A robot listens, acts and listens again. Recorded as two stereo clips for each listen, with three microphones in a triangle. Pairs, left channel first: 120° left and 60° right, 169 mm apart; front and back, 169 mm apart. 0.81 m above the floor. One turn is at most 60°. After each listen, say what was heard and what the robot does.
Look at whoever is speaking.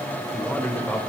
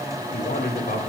The man speaking: 35° left. Turn 35° left.
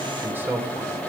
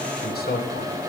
The man speaking is now 15° left. Turn 15° left.
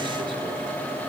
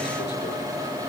Keep listening.
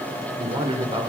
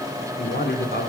Facing the man speaking.